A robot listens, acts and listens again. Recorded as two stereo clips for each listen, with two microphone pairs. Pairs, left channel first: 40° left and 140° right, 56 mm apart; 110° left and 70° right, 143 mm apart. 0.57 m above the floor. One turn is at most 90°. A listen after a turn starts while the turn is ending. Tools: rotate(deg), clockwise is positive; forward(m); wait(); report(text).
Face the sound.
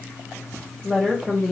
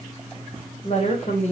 rotate(-90)
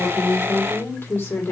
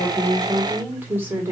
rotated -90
report("Facing the woman speaking, 1 to 2 m away.")